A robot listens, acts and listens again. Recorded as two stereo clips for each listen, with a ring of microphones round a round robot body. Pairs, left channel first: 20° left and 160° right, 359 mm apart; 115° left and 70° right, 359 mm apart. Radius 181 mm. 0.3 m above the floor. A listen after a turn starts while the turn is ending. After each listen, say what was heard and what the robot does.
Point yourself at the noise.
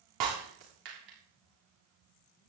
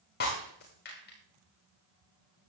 The breaking glass: 175° left. Turn 175° left.
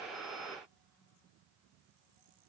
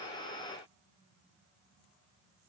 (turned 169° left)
Facing where the breaking glass came from. I can't hear it now.